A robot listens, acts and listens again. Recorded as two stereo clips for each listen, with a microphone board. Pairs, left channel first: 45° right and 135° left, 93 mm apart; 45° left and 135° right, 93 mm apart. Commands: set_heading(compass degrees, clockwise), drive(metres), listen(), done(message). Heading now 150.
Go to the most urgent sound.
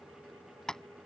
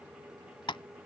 listen()
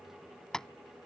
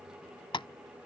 listen()
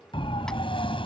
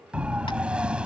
set_heading(205)
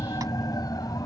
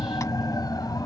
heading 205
drive(1.0)
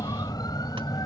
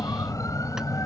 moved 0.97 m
drive(1.0)
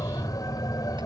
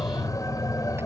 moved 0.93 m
drive(1.0)
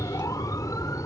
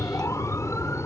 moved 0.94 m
drive(1.0)
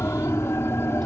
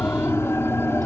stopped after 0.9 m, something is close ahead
done("Arrived at the siren, straight ahead.")